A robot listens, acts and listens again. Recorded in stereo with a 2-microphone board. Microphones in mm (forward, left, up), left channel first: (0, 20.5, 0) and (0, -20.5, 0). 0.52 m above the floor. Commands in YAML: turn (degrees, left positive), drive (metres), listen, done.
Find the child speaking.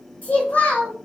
turn: 55
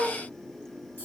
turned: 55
turn: 70
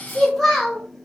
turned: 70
done: "Facing the child speaking, 1 to 2 m away."